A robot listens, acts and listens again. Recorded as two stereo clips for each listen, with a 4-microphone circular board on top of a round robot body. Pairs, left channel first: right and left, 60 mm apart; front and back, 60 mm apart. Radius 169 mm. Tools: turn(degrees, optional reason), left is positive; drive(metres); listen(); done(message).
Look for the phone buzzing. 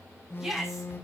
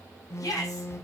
turn(degrees=-40, reason="The phone buzzing: 40° right.")
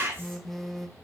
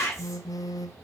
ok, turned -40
done("Facing the phone buzzing.")